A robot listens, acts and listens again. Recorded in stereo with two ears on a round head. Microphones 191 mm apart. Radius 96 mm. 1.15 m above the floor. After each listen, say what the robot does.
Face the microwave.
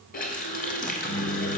Turn 45° left.
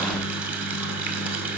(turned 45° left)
Turn 85° left.
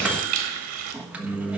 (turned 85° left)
Found it: a microwave, straight ahead.